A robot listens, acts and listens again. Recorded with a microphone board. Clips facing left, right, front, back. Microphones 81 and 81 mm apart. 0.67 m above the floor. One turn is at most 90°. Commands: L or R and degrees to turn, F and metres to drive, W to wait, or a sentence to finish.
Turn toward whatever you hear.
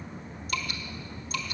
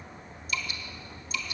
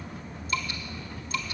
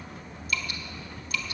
L60
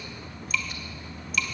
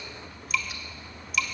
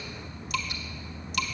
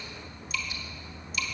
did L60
Found it: dripping, straight ahead.